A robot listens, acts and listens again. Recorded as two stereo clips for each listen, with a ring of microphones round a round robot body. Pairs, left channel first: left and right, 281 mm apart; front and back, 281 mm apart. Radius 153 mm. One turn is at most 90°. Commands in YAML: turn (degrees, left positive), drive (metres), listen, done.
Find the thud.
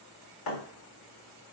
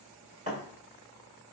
turn: 90
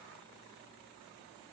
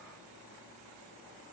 turn: 20
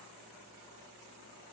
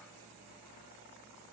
done: "I heard a thud from this way, but can't make it out now."